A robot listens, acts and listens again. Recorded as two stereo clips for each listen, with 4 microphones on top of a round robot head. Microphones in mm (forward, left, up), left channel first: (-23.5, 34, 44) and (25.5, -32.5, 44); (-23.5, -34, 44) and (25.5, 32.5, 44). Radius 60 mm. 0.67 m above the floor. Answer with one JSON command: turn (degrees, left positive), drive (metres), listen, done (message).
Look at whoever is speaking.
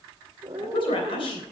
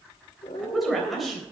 {"turn": 145}
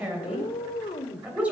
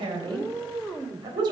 {"turn": 20}
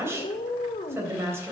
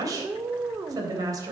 {"done": "Facing the woman speaking, 2 to 4 m away."}